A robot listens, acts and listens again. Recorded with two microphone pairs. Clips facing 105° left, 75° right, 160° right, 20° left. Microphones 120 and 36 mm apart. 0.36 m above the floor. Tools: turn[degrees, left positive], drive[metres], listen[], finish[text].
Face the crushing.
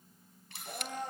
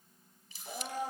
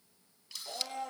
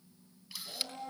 Action: listen[]
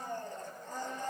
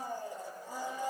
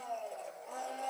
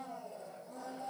Action: listen[]
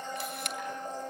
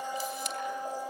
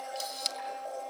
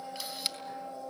Action: finish[I can't make out crushing to turn to.]